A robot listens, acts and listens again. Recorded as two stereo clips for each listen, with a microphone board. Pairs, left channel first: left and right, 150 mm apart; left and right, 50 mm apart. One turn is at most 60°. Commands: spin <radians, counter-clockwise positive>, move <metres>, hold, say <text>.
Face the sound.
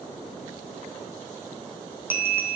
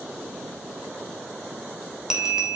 spin -0.52
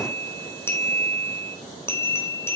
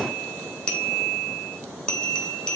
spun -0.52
spin 0.26
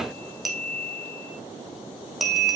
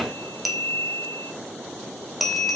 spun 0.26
say Facing the bell.